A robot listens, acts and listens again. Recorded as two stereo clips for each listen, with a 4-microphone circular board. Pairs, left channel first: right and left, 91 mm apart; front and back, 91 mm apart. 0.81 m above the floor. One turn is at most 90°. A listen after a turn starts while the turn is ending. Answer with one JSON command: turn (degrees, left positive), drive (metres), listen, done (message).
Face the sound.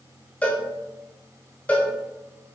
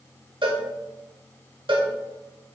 {"turn": -90}
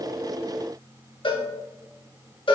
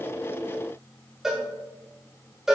{"turn": -90}
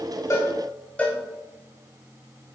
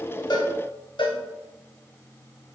{"turn": -15}
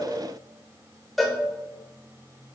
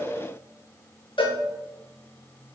{"done": "Found it: a cowbell, straight ahead, under 1 m away."}